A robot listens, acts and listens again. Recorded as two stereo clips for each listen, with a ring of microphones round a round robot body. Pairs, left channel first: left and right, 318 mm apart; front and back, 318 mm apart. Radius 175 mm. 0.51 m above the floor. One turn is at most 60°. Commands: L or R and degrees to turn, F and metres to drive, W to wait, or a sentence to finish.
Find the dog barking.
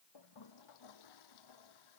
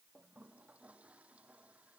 W
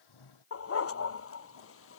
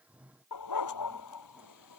L45
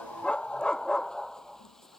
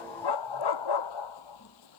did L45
Found it: a dog barking, straight ahead.